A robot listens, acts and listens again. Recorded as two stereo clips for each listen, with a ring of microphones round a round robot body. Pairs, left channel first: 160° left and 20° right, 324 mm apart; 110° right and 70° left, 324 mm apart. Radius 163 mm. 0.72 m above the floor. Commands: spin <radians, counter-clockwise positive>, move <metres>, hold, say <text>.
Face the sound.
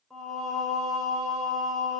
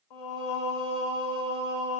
spin -1.92
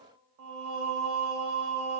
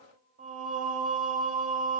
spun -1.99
say Facing the singing.